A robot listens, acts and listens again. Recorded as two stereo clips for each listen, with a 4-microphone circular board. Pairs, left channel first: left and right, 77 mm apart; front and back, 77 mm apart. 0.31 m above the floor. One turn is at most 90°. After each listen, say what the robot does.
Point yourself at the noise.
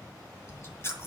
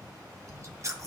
Turn 90° left.
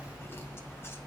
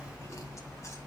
Turn 40° left.
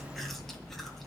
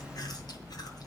Found it: chewing, straight ahead.